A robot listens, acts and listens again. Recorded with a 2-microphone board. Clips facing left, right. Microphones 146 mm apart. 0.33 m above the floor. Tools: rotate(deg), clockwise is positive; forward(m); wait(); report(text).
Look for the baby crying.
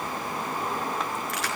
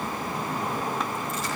wait()
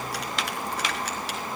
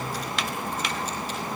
wait()
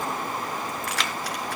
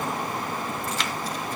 report("I can't make out a baby crying.")